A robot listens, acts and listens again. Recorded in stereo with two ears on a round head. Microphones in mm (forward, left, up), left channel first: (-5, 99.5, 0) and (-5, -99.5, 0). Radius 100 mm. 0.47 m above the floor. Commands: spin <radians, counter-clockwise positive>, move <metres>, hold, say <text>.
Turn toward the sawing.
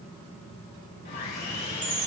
spin 0.70
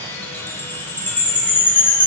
spin 0.26
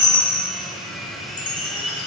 say Facing the sawing, 2 to 4 m away.